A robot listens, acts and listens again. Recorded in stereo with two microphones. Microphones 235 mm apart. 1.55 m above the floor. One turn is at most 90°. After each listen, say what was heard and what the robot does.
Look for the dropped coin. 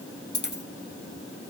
The dropped coin: about 45° left or 135° left. Turn 45° left.
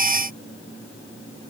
Keep listening.
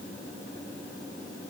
I heard a dropped coin, but can't make it out now. It was about straight ahead or 90° left.